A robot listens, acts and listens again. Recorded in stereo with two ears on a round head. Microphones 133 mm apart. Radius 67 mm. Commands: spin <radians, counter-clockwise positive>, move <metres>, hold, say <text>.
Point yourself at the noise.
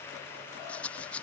spin 0.52
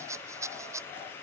spin -0.35
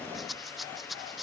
say Facing the rattle.